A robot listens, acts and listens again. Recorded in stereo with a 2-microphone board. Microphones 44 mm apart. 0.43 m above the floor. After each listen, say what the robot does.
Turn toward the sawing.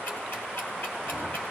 Keep listening.
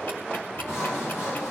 Turn 90° left.
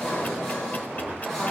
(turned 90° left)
Turn 10° left.
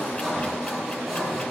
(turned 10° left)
Facing the sawing, over 4 m away.